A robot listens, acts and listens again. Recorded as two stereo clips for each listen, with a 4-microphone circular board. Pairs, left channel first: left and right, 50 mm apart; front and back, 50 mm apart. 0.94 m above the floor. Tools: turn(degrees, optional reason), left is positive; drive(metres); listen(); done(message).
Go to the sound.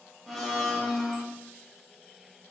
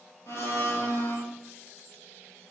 drive(metres=1.0)
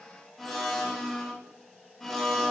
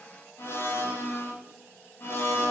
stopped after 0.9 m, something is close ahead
done("Arrived at the blender, straight ahead.")